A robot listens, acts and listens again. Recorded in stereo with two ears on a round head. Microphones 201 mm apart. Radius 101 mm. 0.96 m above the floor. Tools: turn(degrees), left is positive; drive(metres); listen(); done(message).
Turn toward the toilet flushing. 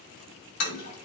turn(degrees=70)
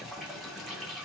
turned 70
done("Facing the toilet flushing, 2 to 4 m away.")